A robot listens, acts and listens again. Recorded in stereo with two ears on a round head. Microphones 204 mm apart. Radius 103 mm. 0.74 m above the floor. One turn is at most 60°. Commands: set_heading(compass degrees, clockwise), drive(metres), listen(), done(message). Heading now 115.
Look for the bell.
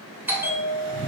set_heading(145)
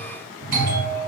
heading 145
set_heading(205)
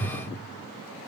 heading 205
set_heading(265)
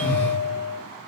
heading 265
set_heading(310)
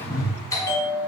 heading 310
set_heading(295)
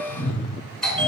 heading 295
done("Facing the bell, 2 to 4 m away.")